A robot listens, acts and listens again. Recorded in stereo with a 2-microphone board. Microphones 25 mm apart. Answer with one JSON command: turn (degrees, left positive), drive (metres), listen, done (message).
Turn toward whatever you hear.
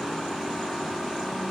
{"listen": true}
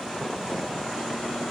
{"listen": true}
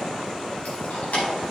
{"turn": 70}
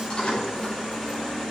{"turn": 45}
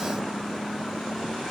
{"listen": true}
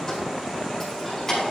{"turn": 15}
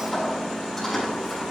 {"done": "Found it: keys jangling, straight ahead, over 4 m away."}